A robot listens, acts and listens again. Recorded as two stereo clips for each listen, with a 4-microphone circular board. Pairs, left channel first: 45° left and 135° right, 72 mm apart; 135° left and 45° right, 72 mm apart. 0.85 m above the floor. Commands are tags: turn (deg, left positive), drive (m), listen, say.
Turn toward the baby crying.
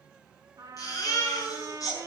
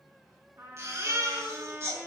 <say>Facing the baby crying, over 4 m away.</say>